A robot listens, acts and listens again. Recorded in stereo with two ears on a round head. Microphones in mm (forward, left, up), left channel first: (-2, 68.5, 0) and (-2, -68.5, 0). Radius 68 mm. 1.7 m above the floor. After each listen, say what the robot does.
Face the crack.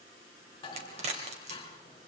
Turn 45° right.
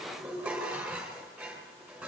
Keep listening.
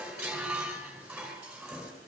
I heard a crack, but can't make it out now. It was about straight ahead or 90° right.